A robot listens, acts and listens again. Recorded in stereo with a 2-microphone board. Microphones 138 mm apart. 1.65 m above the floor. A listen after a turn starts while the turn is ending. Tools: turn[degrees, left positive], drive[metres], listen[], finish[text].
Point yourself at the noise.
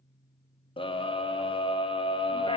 Thought: The scream: about 40° left or 140° left.
Action: turn[40]
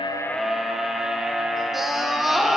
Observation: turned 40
Action: finish[Facing the scream, under 1 m away.]